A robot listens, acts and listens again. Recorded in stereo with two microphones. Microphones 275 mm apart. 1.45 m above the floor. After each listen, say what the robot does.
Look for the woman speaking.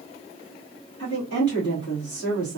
Turn 75° left.
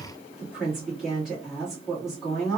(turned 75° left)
Found it: a woman speaking, straight ahead.